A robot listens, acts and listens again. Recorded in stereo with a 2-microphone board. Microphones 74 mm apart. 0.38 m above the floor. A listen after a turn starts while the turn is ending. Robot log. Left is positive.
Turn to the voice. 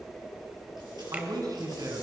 note: The man speaking: about 55° right or 125° right.
cmd yaw -55
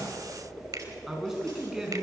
end: Facing the man speaking, over 4 m away.